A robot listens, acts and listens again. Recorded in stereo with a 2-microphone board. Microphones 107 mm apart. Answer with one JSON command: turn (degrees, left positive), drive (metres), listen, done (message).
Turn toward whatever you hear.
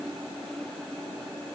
{"listen": true}
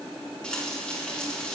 {"turn": 30}
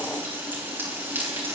{"turn": -20}
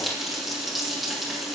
{"done": "Facing the frying."}